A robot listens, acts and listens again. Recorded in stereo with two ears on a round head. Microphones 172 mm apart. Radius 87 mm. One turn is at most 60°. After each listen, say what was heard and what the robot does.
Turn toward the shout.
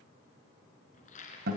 Keep listening.
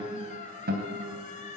Keep listening.
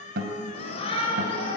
The shout: about 30° left or 150° left. Turn 30° left.
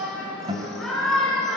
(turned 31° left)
Found it: a shout, straight ahead.